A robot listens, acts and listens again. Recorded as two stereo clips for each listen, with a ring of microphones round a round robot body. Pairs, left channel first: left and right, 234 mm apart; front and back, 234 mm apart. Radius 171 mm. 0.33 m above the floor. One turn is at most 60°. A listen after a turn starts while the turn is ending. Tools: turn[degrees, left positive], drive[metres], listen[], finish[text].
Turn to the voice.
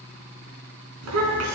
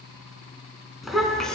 Thought: The child speaking: 85° right.
Action: turn[-60]
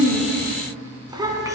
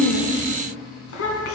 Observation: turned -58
Thought: The child speaking is now 15° right.
Action: turn[-15]
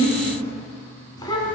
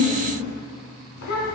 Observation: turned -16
Thought: The child speaking is now 20° left.
Action: turn[20]
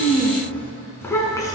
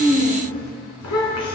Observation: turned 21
Thought: The child speaking is now 15° left.
Action: turn[15]
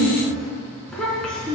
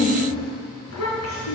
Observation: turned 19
Action: finish[Facing the child speaking.]